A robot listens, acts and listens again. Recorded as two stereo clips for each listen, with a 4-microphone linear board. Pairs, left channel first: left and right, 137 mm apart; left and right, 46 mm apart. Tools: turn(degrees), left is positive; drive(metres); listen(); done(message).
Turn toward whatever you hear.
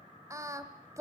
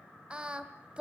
turn(degrees=-20)
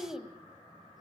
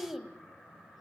done("Found it: singing, straight ahead, 1 to 2 m away.")